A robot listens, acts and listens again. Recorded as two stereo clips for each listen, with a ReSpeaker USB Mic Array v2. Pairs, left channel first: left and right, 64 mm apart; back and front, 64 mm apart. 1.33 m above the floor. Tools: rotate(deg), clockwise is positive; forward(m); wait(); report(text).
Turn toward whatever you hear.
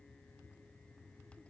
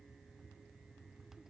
wait()
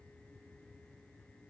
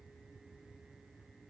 wait()
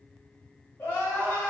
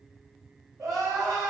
rotate(-30)
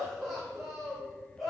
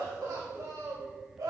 report("Found it: crying, straight ahead.")